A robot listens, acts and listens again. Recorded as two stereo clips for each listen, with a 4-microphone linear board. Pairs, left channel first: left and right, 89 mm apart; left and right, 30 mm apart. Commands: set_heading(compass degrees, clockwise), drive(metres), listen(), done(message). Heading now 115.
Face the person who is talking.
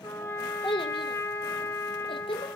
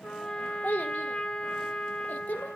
set_heading(40)
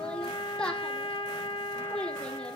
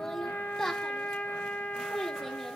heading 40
set_heading(30)
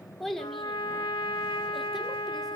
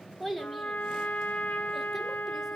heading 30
done("Facing the child speaking.")